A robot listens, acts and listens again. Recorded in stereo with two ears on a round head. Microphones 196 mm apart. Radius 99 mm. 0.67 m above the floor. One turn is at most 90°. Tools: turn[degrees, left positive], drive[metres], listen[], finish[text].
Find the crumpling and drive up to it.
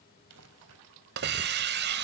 Action: turn[-90]
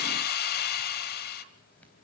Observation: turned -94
Action: listen[]
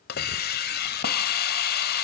Action: listen[]
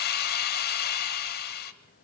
Action: finish[I heard crumpling from this way, but can't make it out now. I did not reach it.]